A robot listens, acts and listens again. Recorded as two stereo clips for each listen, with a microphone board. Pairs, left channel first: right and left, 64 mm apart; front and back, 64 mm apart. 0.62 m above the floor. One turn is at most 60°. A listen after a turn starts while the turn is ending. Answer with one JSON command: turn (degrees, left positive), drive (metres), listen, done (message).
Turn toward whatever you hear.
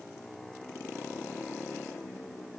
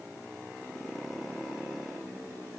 {"listen": true}
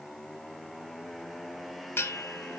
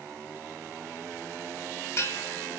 {"turn": -40}
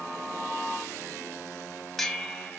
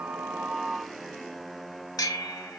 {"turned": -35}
{"done": "Found it: a bell, straight ahead."}